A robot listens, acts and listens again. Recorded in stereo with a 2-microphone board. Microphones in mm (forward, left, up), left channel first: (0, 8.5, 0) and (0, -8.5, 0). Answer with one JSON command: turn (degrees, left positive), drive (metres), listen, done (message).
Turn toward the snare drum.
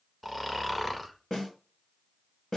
{"turn": 40}
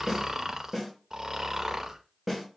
{"done": "Facing the snare drum, 2 to 4 m away."}